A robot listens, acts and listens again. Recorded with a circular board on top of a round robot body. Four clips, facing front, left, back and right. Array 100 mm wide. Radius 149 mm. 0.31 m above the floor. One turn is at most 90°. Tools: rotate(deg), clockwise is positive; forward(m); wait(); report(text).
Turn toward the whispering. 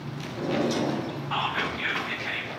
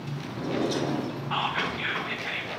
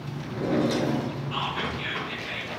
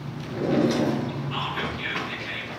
rotate(-50)
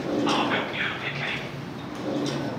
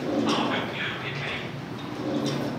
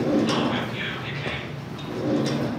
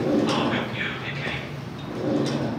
rotate(-10)
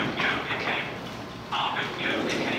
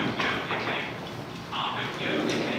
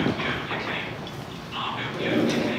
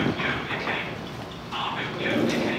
report("Found it: whispering, straight ahead, 2 to 4 m away.")